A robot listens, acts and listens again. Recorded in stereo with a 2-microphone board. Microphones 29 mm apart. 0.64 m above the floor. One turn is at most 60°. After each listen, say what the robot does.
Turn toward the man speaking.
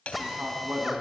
Turn 60° right.
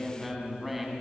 Found it: a man speaking, straight ahead, over 4 m away.